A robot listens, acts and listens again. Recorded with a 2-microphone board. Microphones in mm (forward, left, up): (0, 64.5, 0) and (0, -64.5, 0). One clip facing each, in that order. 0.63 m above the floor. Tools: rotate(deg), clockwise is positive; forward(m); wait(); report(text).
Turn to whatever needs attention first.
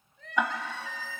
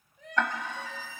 rotate(15)
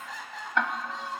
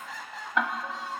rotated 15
report("Found it: crying, straight ahead, 2 to 4 m away.")